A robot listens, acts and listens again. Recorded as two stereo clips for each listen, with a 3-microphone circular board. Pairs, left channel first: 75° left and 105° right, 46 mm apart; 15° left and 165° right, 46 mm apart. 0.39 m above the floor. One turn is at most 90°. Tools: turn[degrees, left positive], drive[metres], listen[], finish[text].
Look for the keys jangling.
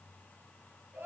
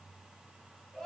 Action: listen[]
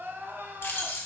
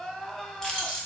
Thought: The keys jangling: 90° left.
Action: turn[90]
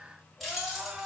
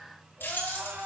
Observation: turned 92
Thought: The keys jangling is now 15° right.
Action: turn[-15]
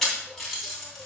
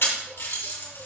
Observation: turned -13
Action: finish[Facing the keys jangling.]